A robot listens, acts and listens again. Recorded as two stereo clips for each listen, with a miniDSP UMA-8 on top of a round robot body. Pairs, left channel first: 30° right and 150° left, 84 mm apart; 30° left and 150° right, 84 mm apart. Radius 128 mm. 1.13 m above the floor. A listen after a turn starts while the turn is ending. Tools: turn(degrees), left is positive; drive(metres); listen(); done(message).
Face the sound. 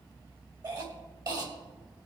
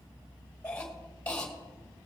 turn(degrees=105)
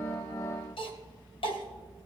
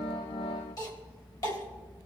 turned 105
turn(degrees=-15)
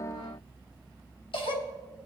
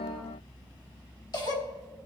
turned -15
done("Facing the cough, 2 to 4 m away.")